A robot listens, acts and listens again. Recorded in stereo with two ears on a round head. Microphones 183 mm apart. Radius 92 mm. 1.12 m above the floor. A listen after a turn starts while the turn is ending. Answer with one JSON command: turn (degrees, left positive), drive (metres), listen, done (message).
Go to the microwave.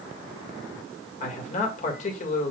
{"listen": true}
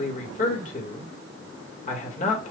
{"listen": true}
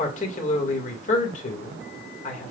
{"done": "I can't make out a microwave, only a man speaking."}